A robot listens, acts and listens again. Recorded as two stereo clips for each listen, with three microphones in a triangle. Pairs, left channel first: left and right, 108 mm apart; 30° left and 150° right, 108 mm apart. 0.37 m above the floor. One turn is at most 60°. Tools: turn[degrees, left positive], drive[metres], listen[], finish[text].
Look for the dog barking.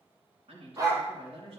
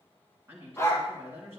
Thought: The dog barking: 35° right.
Action: turn[-35]
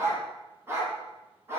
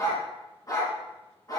Thought: The dog barking is now 25° right.
Action: turn[-25]
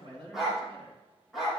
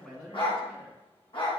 Action: finish[Facing the dog barking, over 4 m away.]